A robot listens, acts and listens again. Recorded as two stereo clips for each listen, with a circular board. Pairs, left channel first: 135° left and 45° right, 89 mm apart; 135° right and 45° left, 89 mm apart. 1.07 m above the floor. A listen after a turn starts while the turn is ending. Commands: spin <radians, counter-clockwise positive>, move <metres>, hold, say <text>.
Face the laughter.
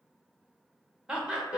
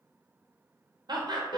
spin 0.61
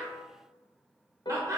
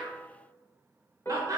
say Found it: laughter, straight ahead, 1 to 2 m away.